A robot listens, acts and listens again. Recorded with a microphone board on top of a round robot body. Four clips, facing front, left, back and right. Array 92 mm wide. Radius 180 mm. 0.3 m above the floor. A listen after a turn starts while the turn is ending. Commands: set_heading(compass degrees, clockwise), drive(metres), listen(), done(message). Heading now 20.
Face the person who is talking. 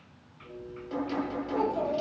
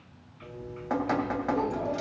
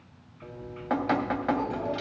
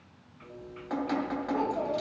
set_heading(45)
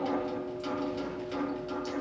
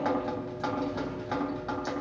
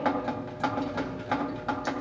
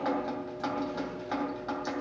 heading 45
listen()
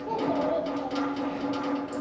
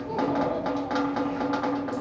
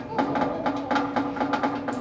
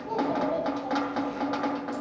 done("Facing the child speaking.")